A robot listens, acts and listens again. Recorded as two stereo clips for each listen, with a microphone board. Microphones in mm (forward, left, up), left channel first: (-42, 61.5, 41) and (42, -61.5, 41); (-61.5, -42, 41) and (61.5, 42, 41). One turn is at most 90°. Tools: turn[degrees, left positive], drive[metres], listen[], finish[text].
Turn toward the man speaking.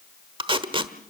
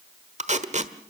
Action: listen[]
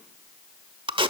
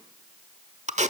Action: listen[]
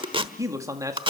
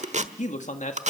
Thought: The man speaking: 120° right.
Action: turn[-90]
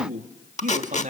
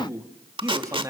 Thought: The man speaking is now 30° right.
Action: turn[-30]
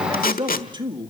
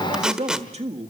Action: finish[Facing the man speaking, 2 to 4 m away.]